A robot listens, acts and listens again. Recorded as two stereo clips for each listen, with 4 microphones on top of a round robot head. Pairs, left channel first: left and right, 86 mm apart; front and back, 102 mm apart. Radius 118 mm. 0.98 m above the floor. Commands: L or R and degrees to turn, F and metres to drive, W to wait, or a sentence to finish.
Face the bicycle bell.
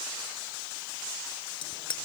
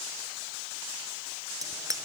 L125
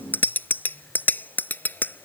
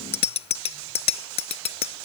L20
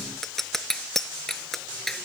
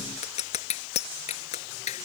Found it: a bicycle bell, straight ahead.